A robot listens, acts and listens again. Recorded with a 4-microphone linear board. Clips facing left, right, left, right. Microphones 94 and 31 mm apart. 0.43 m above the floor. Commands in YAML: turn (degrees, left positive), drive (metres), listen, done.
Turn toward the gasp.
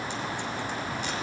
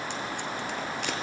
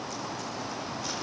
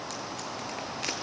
listen: true
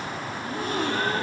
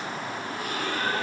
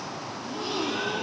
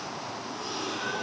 turn: 30
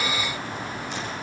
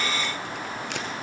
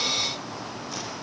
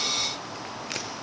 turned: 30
listen: true
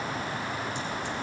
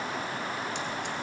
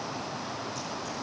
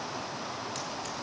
done: "I heard a gasp, but can't make it out now. It was about straight ahead or 120° left."